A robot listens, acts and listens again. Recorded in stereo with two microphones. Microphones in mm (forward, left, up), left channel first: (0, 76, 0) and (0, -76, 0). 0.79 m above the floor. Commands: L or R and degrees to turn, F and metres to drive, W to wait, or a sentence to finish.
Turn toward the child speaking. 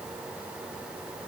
W
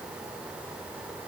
W
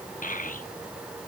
L60
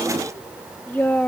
L10
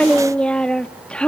Facing the child speaking, under 1 m away.